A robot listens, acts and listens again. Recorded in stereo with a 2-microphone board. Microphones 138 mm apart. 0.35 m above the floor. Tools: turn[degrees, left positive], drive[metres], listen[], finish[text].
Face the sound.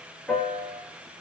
Action: turn[30]
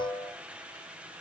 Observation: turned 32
Thought: So it is at 145° left.
Action: turn[145]
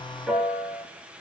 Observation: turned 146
Action: finish[Facing the piano, 2 to 4 m away.]